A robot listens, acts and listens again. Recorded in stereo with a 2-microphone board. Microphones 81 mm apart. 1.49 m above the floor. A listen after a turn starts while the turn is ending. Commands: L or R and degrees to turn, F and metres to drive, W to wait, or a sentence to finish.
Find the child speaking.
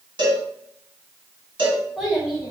R30
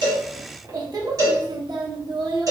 R115
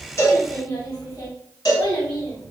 L40
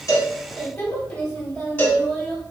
Found it: a child speaking, straight ahead, 1 to 2 m away.